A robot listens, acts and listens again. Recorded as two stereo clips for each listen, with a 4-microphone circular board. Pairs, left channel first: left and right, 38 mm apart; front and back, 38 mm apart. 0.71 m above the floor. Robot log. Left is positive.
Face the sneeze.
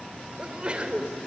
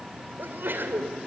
note: The sneeze: 155° right.
cmd yaw -155
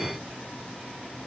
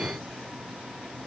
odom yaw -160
end: Facing where the sneeze came from. I can't hear it now.